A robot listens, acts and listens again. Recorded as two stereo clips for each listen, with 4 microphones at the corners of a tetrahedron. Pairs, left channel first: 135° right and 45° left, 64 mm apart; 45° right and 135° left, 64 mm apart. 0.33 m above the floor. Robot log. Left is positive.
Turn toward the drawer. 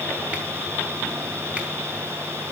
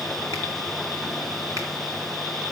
cmd idle
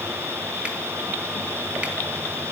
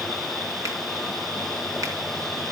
cmd idle
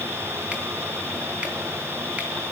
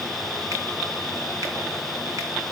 end: I can't make out a drawer.